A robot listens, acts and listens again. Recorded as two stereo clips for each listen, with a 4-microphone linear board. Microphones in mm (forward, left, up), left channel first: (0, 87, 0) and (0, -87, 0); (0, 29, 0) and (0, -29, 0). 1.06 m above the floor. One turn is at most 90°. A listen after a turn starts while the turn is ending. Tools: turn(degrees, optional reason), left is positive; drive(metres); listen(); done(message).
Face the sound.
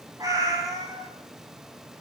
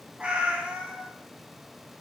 turn(degrees=-20, reason="The cat meowing: about 20° right or 160° right.")
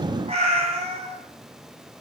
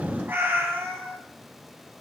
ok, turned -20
turn(degrees=-90, reason="So it is at 135° right.")
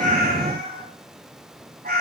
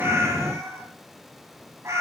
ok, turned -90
turn(degrees=-70, reason="The cat meowing is now 70° right.")
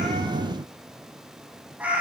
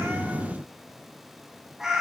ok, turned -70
turn(degrees=-10, reason="The cat meowing is now 10° right.")
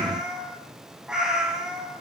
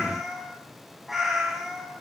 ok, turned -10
done("Facing the cat meowing, 1 to 2 m away.")